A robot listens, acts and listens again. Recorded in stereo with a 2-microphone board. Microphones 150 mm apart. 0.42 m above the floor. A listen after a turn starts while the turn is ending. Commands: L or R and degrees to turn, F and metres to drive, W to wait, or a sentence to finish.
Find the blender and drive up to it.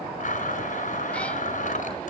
L55
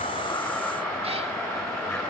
F1.0
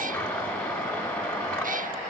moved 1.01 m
L10
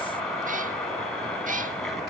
W
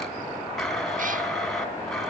F1.0
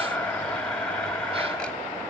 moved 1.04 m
L10
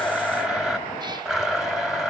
F1.0
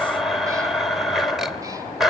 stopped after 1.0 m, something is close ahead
I am next to the blender.